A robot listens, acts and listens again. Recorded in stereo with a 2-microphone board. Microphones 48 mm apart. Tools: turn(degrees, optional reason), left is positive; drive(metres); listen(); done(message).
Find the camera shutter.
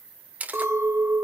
turn(degrees=-35, reason="The camera shutter: about 35° right or 145° right.")
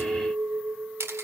turn(degrees=-110, reason="So it is at 110° right.")
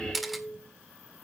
done("Facing the camera shutter, 1 to 2 m away.")